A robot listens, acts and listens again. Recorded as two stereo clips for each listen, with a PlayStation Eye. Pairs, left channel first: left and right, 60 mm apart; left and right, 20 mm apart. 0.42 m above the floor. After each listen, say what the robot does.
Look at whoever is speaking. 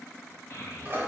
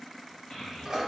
Turn 55° left.
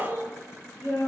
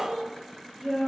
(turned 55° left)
Turn 55° left.
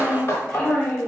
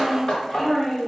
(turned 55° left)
Turn 15° left.
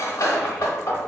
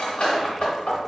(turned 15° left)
Keep listening.
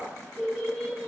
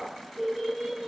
Found it: a child speaking, straight ahead.